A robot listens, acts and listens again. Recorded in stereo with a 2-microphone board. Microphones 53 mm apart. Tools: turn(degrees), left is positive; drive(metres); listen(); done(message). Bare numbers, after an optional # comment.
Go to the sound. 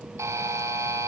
turn(-90)
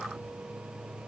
listen()
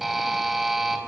drive(1.0)
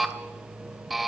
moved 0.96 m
drive(1.0)
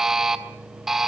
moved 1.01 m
# The buzzer is now 10° right.
turn(-10)
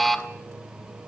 drive(1.0)
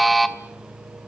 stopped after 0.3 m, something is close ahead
done("Arrived at the buzzer, straight ahead.")